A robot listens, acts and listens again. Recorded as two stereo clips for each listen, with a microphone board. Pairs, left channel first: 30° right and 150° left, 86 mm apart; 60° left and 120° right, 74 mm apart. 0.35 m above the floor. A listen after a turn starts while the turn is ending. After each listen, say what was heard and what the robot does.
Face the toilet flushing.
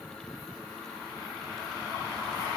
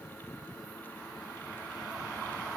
Keep listening.
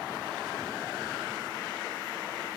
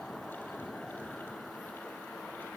Keep listening.
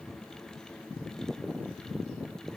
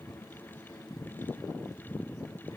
I can't make out a toilet flushing.